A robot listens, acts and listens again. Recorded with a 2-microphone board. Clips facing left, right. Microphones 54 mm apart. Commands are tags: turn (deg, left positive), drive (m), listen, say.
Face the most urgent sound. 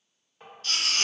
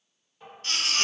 <turn deg="-40"/>
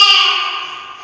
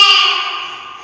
<turn deg="-100"/>
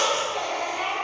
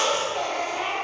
<say>Found it: a baby crying, straight ahead, 1 to 2 m away.</say>